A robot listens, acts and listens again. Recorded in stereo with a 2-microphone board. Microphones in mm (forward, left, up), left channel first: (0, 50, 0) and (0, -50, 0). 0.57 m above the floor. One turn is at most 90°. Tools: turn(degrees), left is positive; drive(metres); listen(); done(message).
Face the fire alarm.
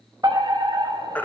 turn(degrees=-40)
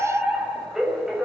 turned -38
done("Found it: a fire alarm, straight ahead, over 4 m away.")